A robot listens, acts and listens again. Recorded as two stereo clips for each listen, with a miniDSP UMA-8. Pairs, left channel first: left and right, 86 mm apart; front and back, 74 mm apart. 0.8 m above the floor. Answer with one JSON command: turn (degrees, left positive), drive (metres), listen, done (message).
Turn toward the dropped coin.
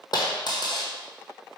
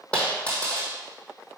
{"turn": 70}
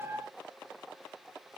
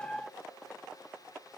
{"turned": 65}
{"done": "I heard a dropped coin from this way, but can't make it out now."}